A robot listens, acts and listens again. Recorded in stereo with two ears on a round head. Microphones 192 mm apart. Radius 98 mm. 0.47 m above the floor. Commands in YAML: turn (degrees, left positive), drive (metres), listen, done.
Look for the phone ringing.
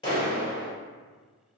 listen: true
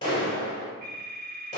turn: -45
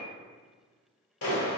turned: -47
listen: true
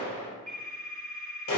done: "Found it: a phone ringing, straight ahead."